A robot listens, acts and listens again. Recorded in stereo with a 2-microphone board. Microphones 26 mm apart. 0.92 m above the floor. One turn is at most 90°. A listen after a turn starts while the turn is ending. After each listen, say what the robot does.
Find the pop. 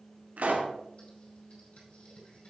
Turn 90° right.
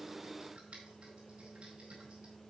Facing where the pop came from. I can't hear it now.